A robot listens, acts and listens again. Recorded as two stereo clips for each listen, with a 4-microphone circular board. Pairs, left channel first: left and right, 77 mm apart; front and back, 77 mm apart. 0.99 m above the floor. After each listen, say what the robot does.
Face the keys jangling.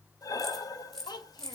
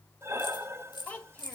Found it: keys jangling, straight ahead, 2 to 4 m away.